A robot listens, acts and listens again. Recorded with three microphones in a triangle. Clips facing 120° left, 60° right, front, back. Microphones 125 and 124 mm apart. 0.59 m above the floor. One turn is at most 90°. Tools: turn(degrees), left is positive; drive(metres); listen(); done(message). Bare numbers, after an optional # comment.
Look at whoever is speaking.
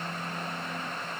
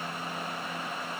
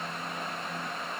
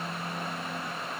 listen()
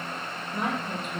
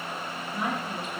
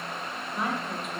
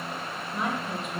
# The woman speaking: 90° left.
turn(90)
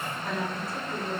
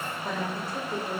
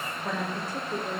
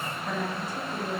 done("Found it: a woman speaking, straight ahead, 2 to 4 m away.")